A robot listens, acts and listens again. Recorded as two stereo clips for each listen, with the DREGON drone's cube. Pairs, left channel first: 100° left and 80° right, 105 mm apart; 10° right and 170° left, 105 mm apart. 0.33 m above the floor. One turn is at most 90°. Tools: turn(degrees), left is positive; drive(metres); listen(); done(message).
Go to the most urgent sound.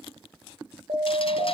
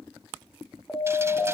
turn(degrees=-85)
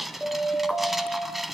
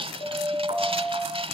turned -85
drive(metres=1.0)
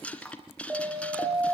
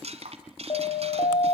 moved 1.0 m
turn(degrees=-10)
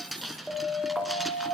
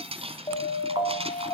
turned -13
drive(metres=1.0)
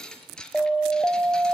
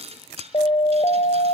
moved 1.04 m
drive(metres=1.0)
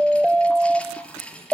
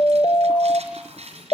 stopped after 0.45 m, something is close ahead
done("Arrived at the siren, straight ahead.")